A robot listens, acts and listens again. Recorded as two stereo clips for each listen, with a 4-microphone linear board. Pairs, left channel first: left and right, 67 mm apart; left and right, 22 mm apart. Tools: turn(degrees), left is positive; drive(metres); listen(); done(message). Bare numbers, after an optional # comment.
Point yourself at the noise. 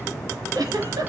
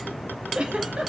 # The giggle: about 70° right or 110° right.
turn(-70)
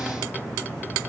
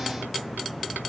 listen()
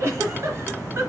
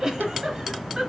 # So it is at 40° right.
turn(-40)
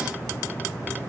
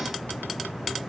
listen()
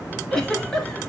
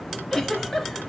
# The giggle is now 10° left.
turn(10)
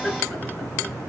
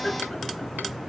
done("Facing the giggle.")